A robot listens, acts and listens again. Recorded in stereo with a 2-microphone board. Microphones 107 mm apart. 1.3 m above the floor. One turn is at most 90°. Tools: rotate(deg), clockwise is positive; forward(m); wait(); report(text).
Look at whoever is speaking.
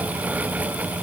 wait()
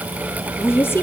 rotate(-20)
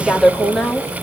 report("Found it: a woman speaking, straight ahead.")